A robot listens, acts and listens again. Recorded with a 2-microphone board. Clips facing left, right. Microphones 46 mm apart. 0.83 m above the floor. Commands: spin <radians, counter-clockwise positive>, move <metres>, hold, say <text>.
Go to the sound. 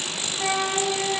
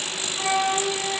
spin -0.52
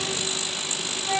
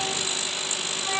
spin -2.36
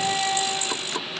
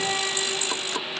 spin -0.87
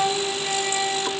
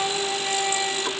move 1.0
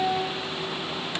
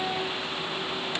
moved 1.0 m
move 1.0
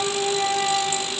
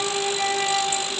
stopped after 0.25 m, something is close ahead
say Arrived at the flute, straight ahead.